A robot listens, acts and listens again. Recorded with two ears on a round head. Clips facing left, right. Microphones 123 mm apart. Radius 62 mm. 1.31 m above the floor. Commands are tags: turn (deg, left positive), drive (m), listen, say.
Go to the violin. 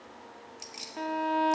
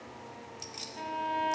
<turn deg="90"/>
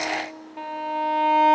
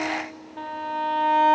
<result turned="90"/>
<turn deg="15"/>
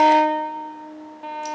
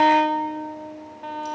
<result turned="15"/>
<drive m="1.0"/>
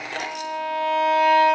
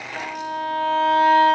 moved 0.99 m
<turn deg="15"/>
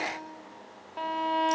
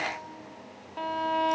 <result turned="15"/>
<drive m="1.0"/>
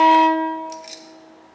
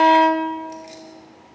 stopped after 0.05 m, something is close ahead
<say>I am next to the violin.</say>